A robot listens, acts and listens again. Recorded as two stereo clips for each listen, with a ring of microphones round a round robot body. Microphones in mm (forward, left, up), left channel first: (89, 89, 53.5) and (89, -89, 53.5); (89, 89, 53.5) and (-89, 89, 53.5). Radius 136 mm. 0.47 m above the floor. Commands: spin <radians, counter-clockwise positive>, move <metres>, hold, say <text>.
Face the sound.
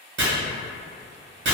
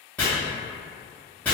spin -1.48
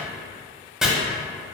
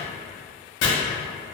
say Facing the chopping, under 1 m away.